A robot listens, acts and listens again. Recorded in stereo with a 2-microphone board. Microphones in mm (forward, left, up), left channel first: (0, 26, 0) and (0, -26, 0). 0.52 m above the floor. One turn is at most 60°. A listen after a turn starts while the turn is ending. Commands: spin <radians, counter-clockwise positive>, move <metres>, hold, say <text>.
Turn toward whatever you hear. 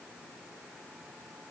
hold
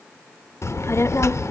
spin 1.05
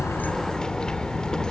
spin 0.26
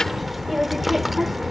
say Facing the child speaking, under 1 m away.